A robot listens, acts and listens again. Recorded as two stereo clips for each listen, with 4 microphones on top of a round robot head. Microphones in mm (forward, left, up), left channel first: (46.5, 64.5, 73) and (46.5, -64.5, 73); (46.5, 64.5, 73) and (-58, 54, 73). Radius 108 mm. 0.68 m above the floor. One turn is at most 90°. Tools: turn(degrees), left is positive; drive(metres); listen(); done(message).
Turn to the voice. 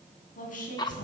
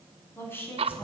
turn(degrees=75)
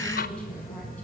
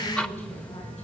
listen()
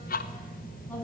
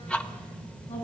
turn(degrees=15)
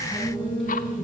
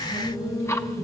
listen()
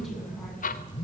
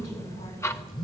listen()
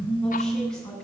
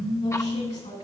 done("Found it: a woman speaking, straight ahead, over 4 m away.")